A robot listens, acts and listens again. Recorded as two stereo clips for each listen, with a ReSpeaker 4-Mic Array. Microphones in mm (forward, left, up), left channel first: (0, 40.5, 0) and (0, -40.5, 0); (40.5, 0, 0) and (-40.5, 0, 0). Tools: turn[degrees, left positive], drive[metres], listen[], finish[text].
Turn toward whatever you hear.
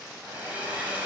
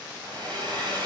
Thought: The hair dryer: 160° right.
Action: turn[-160]
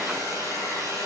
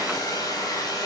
Thought: The hair dryer is now 40° right.
Action: turn[-40]
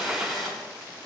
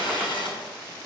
Action: finish[Facing the hair dryer.]